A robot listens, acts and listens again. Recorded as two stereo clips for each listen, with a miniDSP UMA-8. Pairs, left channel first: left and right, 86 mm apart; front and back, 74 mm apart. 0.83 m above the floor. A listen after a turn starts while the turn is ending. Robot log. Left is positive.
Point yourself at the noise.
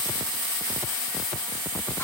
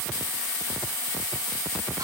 cmd idle
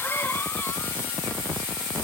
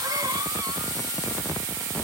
note: The cough: 150° left.
cmd yaw +150
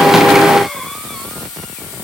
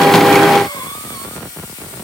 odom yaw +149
cmd idle
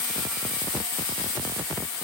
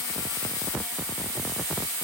cmd idle
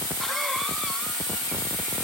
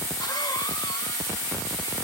end: I heard a cough from this way, but can't make it out now.